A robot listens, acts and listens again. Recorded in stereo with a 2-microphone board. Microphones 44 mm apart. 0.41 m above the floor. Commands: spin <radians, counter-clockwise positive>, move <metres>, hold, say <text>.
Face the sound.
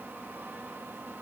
hold
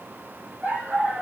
spin -0.61
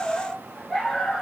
spin 0.17
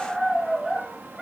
say Facing the dog barking.